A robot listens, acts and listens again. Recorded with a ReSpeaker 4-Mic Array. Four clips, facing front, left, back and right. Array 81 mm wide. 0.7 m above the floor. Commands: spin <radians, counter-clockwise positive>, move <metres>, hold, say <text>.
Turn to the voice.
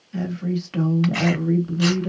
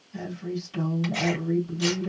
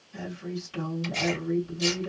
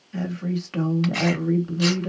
spin -0.96
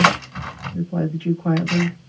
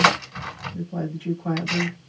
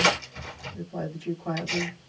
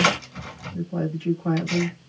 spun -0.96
say Found it: a woman speaking, straight ahead, 1 to 2 m away.